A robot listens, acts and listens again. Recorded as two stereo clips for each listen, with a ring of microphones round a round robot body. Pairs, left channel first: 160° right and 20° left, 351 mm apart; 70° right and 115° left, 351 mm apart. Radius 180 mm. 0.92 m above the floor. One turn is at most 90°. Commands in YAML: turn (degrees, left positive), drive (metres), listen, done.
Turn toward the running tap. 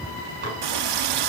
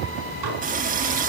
turn: 45
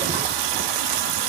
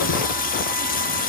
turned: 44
done: "Found it: a running tap, straight ahead, 1 to 2 m away."